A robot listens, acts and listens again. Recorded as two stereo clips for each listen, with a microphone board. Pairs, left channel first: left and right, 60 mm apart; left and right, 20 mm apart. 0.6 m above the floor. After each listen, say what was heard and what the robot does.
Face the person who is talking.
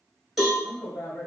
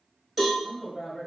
The woman speaking: about 25° left or 155° left. Turn 25° left.
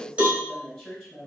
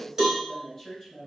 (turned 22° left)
Found it: a woman speaking, straight ahead, 2 to 4 m away.